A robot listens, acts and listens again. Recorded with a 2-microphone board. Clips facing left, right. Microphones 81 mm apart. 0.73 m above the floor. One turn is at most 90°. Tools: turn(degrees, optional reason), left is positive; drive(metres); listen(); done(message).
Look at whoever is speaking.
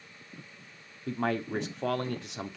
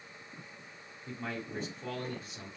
turn(degrees=70, reason="The man speaking: about 70° left or 110° left.")
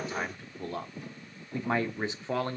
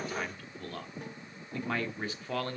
turn(degrees=25, reason="So it is at 25° left.")
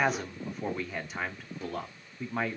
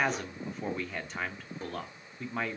done("Facing the man speaking.")